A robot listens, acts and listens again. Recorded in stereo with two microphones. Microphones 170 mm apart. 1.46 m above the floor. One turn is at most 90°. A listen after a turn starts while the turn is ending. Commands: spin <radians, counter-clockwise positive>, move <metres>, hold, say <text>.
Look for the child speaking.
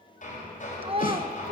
spin -0.52
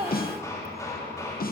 hold
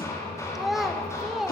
say Found it: a child speaking, straight ahead, 1 to 2 m away.